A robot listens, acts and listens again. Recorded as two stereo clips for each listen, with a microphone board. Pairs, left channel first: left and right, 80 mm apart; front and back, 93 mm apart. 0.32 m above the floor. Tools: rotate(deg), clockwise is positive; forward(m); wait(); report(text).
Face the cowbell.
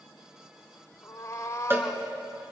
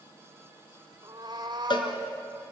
rotate(30)
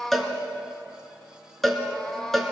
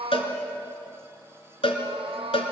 report("Found it: a cowbell, straight ahead, 2 to 4 m away.")